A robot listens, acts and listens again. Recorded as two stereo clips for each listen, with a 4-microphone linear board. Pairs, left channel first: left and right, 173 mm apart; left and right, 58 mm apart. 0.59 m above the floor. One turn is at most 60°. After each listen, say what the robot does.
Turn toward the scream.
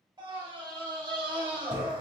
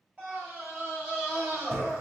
Turn 30° right.
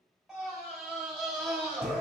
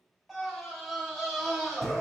Facing the scream, 1 to 2 m away.